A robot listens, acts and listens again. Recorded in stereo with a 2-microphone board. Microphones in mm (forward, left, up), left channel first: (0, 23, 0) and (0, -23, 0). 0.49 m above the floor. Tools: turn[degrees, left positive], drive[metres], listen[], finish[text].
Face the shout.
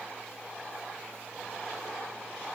Action: listen[]
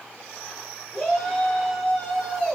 Thought: The shout: about 25° left or 155° left.
Action: turn[25]
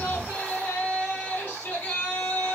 Thought: So it is at 130° left.
Action: turn[130]
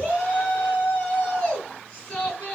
Thought: The shout is now 15° left.
Action: turn[15]
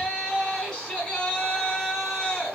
Thought: The shout is now 10° left.
Action: turn[10]
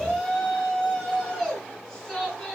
Action: finish[Facing the shout, over 4 m away.]